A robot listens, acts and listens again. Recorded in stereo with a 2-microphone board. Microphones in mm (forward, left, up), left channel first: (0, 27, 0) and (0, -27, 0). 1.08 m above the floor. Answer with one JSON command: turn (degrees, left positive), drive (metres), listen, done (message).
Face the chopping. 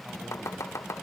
{"turn": 65}
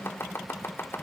{"turn": 50}
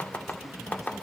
{"turn": 30}
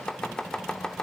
{"turn": 15}
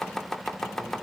{"turn": 10}
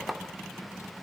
{"done": "Found it: chopping, straight ahead."}